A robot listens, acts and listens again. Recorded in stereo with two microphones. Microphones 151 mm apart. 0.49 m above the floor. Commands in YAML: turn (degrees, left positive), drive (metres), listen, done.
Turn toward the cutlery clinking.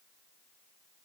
listen: true
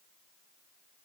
listen: true
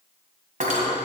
turn: -60
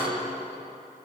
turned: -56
listen: true
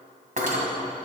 turn: -65
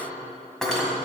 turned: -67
done: "Facing the cutlery clinking, 2 to 4 m away."